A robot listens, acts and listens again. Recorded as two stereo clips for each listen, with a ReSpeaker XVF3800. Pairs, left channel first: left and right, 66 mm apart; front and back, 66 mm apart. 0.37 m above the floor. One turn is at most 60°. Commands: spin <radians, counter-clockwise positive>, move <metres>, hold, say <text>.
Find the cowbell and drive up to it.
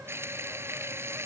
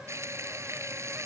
hold
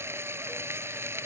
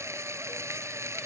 hold
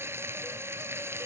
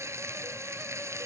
say I can't make out a cowbell, only frying.